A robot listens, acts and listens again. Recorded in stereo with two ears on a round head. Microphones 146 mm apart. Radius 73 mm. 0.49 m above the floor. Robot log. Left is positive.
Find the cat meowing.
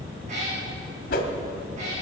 note: The cat meowing: about 45° right or 135° right.
cmd yaw -45
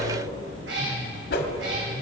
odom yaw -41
note: So it is at 90° right.
cmd yaw -90
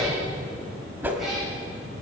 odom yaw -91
cmd idle
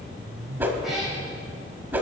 cmd idle
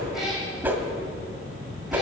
end: I heard a cat meowing from this way, but can't make it out now.